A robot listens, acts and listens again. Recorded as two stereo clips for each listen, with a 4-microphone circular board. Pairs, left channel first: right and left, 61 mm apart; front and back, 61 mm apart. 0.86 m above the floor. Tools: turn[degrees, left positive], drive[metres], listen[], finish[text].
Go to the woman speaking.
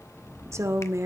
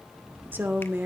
Thought: The woman speaking: 125° left.
Action: turn[125]
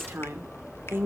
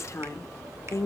Thought: The woman speaking is now 40° left.
Action: turn[40]
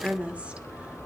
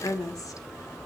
Thought: The woman speaking is now 20° left.
Action: turn[20]
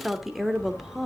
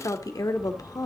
Action: drive[1.0]
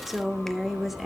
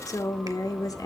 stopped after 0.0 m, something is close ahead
Action: finish[Blocked. The woman speaking is further on, straight ahead.]